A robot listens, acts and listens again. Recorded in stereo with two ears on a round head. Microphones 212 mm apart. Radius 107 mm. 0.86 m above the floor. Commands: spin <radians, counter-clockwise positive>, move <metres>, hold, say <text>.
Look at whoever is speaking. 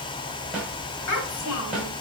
spin 1.57
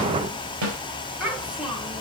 say Facing the child speaking.